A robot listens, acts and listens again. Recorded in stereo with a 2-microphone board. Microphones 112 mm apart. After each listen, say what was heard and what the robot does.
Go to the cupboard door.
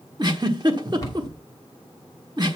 The cupboard door: about 35° left or 145° left. Turn 35° left.
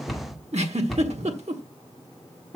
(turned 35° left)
Drive 1.0 m forward.
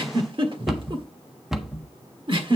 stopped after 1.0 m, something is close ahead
Arrived at the cupboard door, straight ahead.